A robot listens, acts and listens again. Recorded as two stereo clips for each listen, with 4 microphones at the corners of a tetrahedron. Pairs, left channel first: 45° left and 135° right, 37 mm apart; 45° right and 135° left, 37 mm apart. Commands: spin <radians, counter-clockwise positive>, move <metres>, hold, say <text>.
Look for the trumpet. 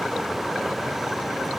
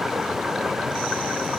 hold
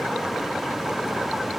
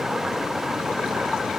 hold
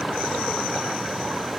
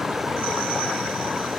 say I can't make out a trumpet.